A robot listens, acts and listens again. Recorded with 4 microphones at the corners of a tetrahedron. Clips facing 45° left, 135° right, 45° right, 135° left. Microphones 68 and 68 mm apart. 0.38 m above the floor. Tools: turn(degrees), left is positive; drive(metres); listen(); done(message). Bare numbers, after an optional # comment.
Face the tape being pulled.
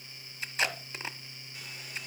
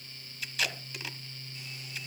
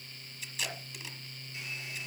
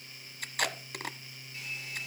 # The tape being pulled: 105° left.
turn(105)
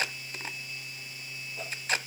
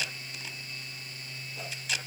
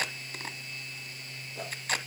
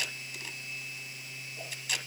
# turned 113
done("Found it: tape being pulled, straight ahead.")